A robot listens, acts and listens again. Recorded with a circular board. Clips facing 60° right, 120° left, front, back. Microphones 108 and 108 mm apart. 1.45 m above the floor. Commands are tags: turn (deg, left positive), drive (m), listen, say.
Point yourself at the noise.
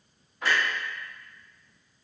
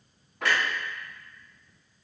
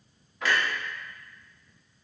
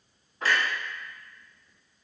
<turn deg="130"/>
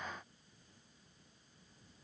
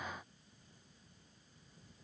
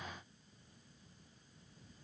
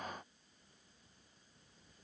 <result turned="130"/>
<say>Facing where the clunk came from. I can't hear it now.</say>